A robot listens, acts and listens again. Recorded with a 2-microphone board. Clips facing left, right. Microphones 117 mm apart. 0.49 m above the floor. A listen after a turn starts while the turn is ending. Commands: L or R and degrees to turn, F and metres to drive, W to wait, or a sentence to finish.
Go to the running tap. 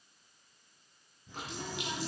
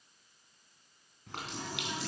R75
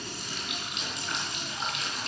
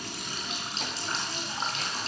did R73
R35
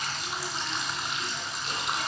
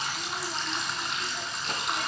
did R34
F1.0
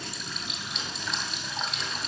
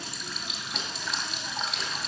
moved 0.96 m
F1.0
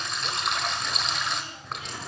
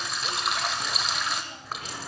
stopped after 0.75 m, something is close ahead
I am next to the running tap.